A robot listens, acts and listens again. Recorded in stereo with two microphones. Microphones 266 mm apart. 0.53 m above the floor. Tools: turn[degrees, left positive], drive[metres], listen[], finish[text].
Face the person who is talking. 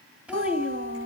Action: turn[-30]
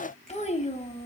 Thought: So it is at 25° left.
Action: turn[25]
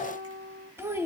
Thought: The child speaking is now 10° right.
Action: turn[-10]
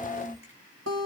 Action: finish[Found it: a child speaking, straight ahead, 2 to 4 m away.]